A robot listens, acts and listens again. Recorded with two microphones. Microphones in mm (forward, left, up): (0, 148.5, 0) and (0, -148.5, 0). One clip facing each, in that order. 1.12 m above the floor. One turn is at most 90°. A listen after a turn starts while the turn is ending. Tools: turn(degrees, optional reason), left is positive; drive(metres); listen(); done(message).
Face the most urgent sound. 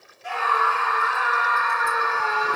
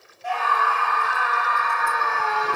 turn(degrees=35, reason="The scream: about 35° left or 145° left.")
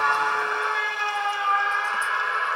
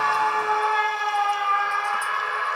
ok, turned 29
done("Facing the scream.")